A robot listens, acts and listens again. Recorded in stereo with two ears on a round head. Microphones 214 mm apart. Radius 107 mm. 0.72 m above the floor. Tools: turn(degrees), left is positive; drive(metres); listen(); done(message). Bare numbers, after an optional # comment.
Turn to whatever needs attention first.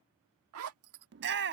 # The shout: about 45° right or 135° right.
turn(-45)
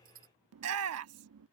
# So it is at 80° right.
turn(-80)
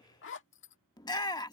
# The shout is now 20° left.
turn(20)
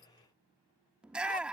done("Facing the shout.")